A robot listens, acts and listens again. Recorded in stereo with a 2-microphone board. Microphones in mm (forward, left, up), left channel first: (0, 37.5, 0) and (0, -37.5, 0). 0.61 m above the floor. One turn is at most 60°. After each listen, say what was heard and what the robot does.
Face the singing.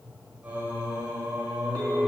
The singing: about 30° right or 150° right. Turn 30° right.
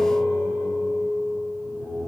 The singing: about 20° right or 160° right. Turn 20° right.
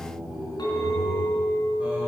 So it is at 10° right. Turn 10° right.
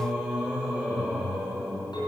The singing is now 10° right. Turn 10° right.
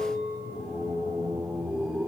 Facing the singing, 2 to 4 m away.